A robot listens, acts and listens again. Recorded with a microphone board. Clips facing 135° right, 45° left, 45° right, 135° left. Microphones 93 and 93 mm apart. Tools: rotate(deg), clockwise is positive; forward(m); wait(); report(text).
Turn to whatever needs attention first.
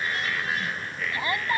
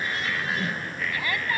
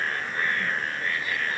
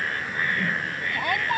rotate(-160)
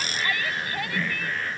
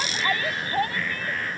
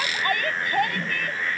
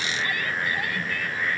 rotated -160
rotate(10)
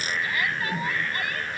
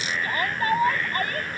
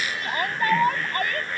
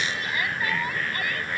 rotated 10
report("Found it: a shout, straight ahead.")